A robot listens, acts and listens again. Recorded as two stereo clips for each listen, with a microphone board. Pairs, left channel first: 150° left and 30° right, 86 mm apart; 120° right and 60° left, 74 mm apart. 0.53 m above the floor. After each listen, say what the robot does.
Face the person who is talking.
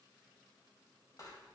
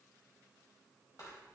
Keep listening.
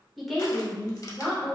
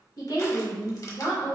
Turn 140° right.
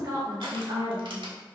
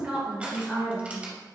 Turn 20° right.
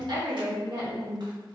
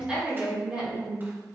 Turn 20° right.
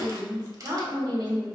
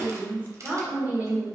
Found it: a woman speaking, straight ahead.